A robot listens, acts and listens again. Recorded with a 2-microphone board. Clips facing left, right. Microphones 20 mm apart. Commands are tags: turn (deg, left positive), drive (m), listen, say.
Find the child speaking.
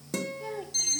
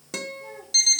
<turn deg="75"/>
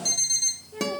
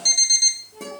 <turn deg="40"/>
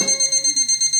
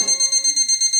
<listen/>
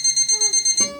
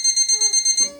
<listen/>
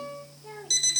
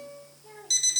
<turn deg="25"/>
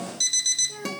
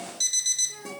<turn deg="20"/>
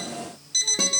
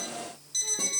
<listen/>
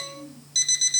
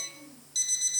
<say>Facing the child speaking.</say>